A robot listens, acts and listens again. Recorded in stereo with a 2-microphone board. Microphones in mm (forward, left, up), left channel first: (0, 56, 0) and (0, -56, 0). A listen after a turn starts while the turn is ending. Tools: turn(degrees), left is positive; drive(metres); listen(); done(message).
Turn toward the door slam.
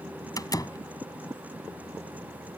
turn(degrees=35)
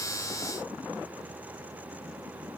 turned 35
listen()
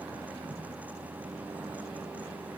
done("I heard a door slam, but can't make it out now. It was about straight ahead or 110° left.")